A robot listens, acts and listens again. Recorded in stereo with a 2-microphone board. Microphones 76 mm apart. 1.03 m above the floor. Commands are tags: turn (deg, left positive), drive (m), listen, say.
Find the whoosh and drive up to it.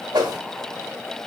<turn deg="-70"/>
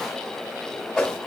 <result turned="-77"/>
<drive m="1.0"/>
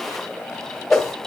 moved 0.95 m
<drive m="1.0"/>
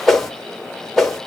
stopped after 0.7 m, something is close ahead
<say>I am next to the whoosh.</say>